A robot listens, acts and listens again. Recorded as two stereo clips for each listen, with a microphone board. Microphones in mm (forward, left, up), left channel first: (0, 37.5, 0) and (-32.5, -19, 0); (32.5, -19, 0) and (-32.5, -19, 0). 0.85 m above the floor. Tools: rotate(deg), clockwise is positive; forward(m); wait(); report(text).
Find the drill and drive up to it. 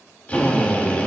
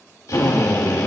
forward(1.0)
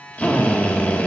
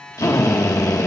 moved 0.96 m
forward(1.0)
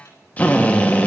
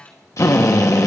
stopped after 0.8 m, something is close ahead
report("I am next to the drill.")